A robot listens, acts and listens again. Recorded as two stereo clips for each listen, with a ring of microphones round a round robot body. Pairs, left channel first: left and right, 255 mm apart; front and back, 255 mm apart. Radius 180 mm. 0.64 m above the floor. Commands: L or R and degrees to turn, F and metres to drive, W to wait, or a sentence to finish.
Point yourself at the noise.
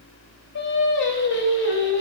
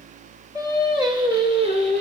L115
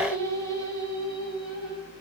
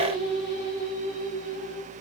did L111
L20
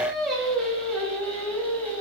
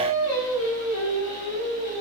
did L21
Facing the singing, over 4 m away.